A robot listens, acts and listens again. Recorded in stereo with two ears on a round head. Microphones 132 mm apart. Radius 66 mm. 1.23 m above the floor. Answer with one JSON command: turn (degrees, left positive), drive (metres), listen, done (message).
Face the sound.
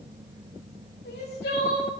{"turn": 90}
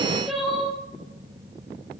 {"done": "Found it: crying, straight ahead, 2 to 4 m away."}